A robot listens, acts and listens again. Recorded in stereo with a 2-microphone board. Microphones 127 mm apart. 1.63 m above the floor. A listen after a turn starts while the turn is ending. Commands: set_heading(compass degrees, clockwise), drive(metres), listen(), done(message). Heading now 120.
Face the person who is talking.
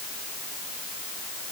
listen()
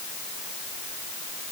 listen()
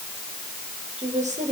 set_heading(185)
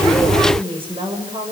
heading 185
set_heading(230)
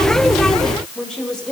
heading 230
done("Facing the woman speaking, over 4 m away.")